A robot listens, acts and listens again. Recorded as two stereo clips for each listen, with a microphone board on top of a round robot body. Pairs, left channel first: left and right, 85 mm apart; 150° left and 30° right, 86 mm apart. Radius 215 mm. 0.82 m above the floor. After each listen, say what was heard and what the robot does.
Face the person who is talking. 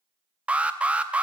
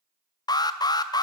Keep listening.
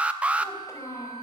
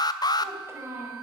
The child speaking: 30° left. Turn 30° left.
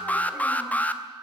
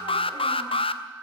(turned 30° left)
Keep listening.
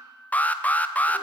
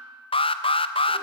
Keep listening.
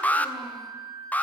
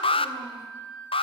Facing where the child speaking came from. I can't hear it now.